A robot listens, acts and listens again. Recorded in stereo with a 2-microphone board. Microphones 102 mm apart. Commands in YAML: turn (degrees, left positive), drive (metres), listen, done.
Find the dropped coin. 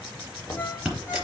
turn: -30
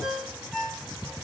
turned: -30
listen: true
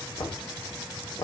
done: "I heard a dropped coin, but can't make it out now. It was about 25° left or 145° right."